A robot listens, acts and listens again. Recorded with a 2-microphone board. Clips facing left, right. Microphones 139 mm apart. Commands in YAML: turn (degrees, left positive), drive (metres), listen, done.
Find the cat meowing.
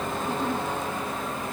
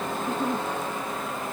listen: true
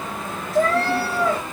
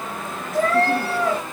turn: -55
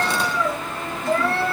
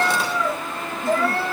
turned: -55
done: "Found it: a cat meowing, straight ahead, over 4 m away."